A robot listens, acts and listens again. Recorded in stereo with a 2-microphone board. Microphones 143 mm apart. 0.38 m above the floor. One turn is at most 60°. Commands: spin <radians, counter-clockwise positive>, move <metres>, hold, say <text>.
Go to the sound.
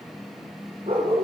spin -0.70
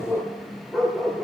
move 1.0
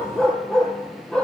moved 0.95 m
move 1.0
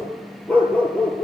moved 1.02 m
spin 0.17
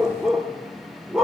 move 1.0
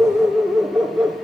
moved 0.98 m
move 1.0
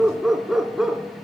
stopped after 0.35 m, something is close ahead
say Arrived at the dog barking, straight ahead.